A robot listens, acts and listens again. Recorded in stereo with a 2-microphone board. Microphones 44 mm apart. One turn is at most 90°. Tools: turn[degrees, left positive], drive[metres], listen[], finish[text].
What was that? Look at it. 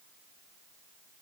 Action: listen[]
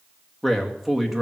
Action: turn[-30]
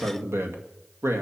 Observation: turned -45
Thought: So it is at 110° right.
Action: turn[-90]
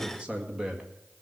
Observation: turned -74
Thought: The man speaking is now 20° right.
Action: turn[-20]
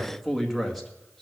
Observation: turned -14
Action: finish[Found it: a man speaking, straight ahead, 2 to 4 m away.]